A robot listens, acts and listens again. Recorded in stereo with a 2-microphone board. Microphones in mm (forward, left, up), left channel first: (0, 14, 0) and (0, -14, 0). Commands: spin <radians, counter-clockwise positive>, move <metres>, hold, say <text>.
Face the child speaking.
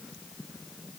hold
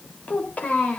spin 1.13
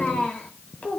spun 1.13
spin 1.13
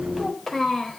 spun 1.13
spin 0.17
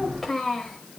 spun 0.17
spin 0.17
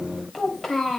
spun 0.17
say Found it: a child speaking, straight ahead, 2 to 4 m away.